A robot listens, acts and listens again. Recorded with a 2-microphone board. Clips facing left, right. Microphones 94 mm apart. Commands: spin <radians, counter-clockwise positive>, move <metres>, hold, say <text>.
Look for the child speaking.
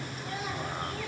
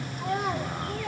spin -0.96
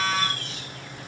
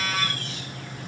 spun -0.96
hold
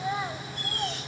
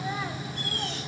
spin 0.35
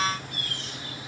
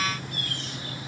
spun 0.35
hold
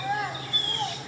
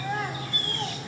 spin 0.26
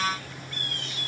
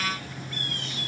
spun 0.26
hold
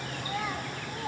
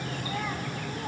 spin 0.17
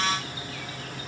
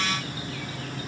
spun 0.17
hold
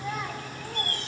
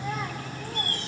say Found it: a child speaking, straight ahead, 2 to 4 m away.